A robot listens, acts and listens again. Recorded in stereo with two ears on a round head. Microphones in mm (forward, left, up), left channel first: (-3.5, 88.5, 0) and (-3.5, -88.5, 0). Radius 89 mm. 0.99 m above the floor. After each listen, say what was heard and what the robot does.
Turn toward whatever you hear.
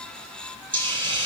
The hiss: about 25° right or 155° right. Turn 25° right.
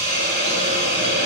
So it is at 130° right. Turn 130° right.
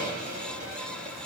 The hiss is now 40° right. Turn 40° right.
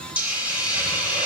Found it: a hiss, straight ahead, over 4 m away.